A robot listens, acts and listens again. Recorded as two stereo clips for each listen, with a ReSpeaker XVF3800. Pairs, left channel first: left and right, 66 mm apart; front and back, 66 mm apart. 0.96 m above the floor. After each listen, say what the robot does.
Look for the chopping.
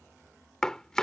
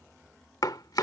Turn 10° left.
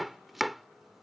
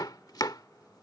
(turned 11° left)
Facing the chopping.